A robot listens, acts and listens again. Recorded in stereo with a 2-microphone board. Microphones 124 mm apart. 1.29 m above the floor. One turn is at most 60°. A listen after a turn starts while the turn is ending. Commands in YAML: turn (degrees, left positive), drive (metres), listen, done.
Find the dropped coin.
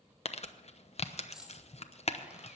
turn: -30
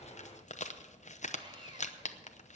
listen: true
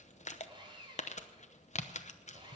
done: "I heard a dropped coin, but can't make it out now. It was about 25° left or 145° right."